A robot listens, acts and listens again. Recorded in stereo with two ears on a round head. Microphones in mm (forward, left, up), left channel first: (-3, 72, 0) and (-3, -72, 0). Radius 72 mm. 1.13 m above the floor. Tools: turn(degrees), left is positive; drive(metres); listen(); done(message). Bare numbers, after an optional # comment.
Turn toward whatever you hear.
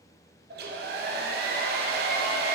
# The hair dryer: about 70° right or 110° right.
turn(-70)
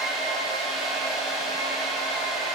done("Found it: a hair dryer, straight ahead, under 1 m away.")